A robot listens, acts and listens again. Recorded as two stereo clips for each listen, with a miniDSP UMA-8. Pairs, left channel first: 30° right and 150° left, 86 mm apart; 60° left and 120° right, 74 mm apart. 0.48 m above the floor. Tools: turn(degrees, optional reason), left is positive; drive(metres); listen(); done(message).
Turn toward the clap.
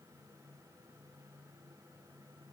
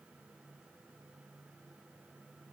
listen()
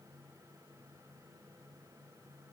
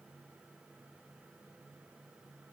listen()
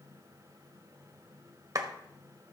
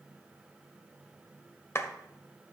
turn(degrees=110, reason="The clap: 110° left.")
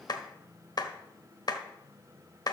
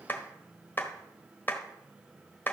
done("Facing the clap.")